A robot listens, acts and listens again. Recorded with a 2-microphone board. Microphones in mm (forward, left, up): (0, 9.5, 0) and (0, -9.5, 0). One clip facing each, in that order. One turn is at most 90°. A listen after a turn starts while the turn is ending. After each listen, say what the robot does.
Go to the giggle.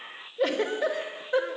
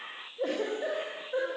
Turn 90° left.
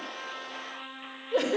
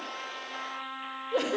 Drive 1.0 m forward.
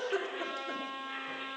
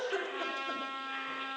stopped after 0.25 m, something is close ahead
Turn 10° right.
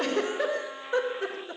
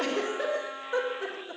Blocked. The giggle is further on, straight ahead.